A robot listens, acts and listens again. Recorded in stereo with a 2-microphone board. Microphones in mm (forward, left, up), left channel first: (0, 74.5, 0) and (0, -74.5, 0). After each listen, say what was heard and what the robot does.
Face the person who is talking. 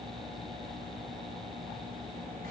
Keep listening.
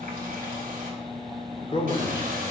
The man speaking: about 40° left or 140° left. Turn 40° left.
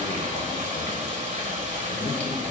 So it is at 90° left. Turn 90° left.
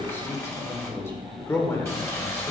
The man speaking is now 20° left. Turn 20° left.
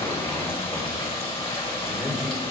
Found it: a man speaking, straight ahead, 1 to 2 m away.